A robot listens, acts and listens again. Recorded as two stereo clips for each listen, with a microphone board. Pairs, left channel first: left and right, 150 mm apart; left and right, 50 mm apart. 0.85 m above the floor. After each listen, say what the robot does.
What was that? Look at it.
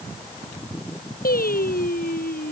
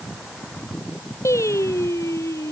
Turn 90° left.
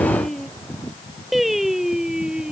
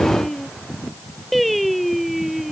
Found it: singing, straight ahead.